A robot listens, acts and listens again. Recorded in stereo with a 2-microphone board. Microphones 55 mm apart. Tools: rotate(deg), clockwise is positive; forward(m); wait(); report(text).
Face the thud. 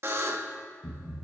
rotate(-60)
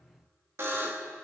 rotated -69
wait()
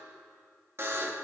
report("I heard a thud, but can't make it out now. It was about 10° right or 50° left.")